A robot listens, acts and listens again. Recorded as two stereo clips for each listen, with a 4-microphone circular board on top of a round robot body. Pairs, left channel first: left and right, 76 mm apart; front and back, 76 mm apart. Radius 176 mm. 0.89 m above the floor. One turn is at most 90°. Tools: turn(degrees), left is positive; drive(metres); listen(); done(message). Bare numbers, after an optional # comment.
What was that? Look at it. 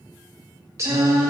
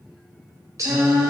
# The singing: 135° right.
turn(-90)
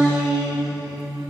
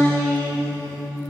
# The singing is now 65° right.
turn(-65)
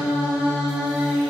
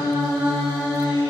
# The singing is now 10° right.
turn(-10)
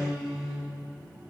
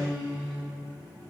done("Found it: singing, straight ahead.")